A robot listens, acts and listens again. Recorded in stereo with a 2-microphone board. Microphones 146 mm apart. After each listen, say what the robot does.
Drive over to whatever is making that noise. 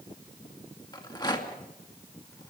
Turn 30° left.
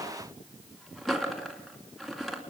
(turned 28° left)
Drive 1.0 m forward.
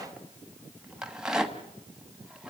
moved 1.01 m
Drive 1.0 m forward.
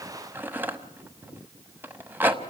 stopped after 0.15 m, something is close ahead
Turn 15° right.
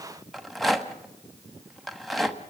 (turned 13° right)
Arrived at the rattle, straight ahead.